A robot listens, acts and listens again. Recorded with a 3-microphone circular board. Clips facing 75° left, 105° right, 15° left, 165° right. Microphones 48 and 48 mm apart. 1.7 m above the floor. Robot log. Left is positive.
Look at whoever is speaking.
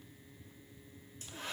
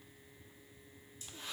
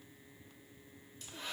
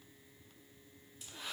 cmd idle
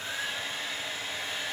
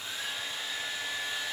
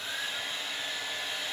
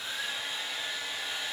cmd idle
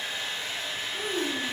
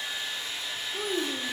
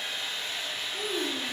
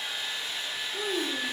note: The child speaking: 115° right.
cmd yaw -115
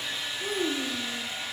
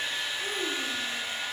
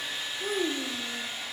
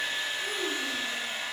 end: Facing the child speaking, under 1 m away.